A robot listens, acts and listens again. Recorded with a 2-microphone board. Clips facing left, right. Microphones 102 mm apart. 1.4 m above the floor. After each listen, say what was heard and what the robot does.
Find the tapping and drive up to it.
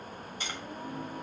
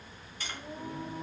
The tapping: about 20° left or 160° left. Turn 20° left.
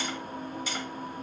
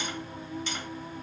Keep listening.
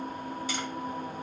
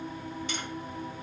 Keep listening.
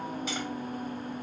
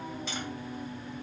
I heard tapping, but can't make it out now. It was about straight ahead or 140° left. I did not reach it.